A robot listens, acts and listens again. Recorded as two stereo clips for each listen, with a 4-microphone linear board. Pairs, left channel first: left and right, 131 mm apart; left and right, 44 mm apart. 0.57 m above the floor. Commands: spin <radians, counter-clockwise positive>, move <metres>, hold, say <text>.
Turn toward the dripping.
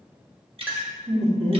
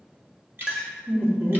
spin -0.79
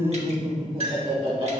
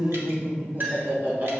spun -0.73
hold
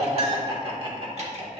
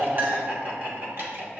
hold
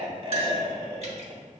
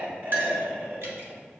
say I heard dripping, but can't make it out now. It was about 5° right or 90° right.